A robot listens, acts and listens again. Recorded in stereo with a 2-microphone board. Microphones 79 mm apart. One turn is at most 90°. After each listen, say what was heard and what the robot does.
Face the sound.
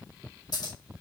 Keep listening.
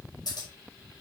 The scissors: about 55° left or 125° left. Turn 55° left.
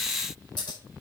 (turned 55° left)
Keep listening.
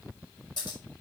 So it is at 70° left. Turn 70° left.
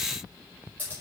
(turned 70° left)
The scissors is now 20° left. Turn 20° left.
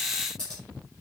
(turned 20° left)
The scissors is now 10° left. Turn 10° left.
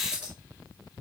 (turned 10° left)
Keep listening.
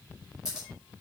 Facing the scissors, over 4 m away.